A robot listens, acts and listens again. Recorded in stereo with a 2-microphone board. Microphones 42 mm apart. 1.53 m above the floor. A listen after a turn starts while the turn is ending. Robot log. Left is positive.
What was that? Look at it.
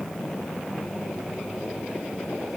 cmd idle
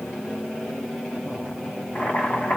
note: The boiling: about 40° left or 140° left.
cmd yaw +40
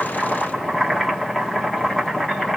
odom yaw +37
end: Found it: boiling, straight ahead.